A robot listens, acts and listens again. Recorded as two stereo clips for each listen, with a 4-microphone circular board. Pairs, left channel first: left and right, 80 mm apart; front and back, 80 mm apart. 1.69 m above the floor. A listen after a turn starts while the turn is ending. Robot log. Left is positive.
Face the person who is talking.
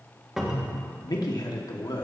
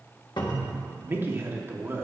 note: The man speaking: 120° left.
cmd yaw +120
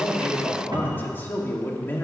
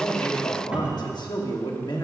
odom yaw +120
note: The man speaking is now 25° left.
cmd yaw +25
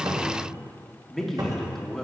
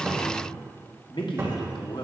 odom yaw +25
end: Found it: a man speaking, straight ahead, 1 to 2 m away.